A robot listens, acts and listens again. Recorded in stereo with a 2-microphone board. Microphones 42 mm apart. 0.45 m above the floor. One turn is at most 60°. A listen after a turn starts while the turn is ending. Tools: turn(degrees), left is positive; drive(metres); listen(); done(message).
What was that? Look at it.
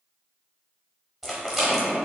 turn(degrees=-30)
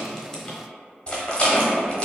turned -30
turn(degrees=25)
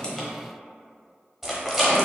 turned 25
done("Facing the rattle.")